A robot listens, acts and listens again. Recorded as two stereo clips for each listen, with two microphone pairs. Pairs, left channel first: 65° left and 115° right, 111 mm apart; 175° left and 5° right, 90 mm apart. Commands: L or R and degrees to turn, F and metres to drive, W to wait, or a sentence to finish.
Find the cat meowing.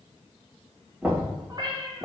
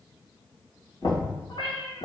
R165
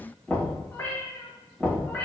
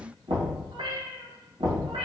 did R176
R10
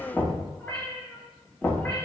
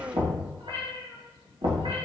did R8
R10
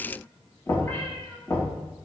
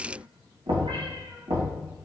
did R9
W
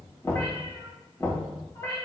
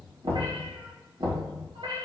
Facing the cat meowing, 2 to 4 m away.